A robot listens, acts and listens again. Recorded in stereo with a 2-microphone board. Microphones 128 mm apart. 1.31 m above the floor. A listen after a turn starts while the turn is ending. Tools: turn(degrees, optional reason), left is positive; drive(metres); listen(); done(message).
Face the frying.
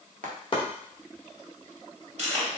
turn(degrees=-90)
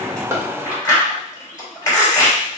listen()
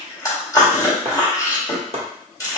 listen()
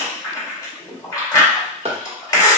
done("I heard frying from this way, but can't make it out now.")